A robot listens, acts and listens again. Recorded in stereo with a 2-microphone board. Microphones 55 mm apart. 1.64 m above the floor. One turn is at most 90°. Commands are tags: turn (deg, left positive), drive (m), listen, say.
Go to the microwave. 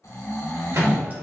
<turn deg="-65"/>
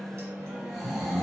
<listen/>
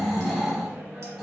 <listen/>
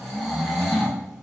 <say>I heard a microwave, but can't make it out now. It was about straight ahead or 50° right. I did not reach it.</say>